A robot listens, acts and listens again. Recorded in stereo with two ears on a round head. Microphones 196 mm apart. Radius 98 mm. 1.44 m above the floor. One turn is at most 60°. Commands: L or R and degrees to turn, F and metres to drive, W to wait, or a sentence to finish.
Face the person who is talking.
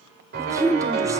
R30
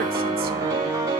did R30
W
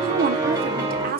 R60
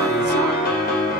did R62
R60
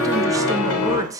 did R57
R15
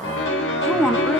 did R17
Facing the woman speaking.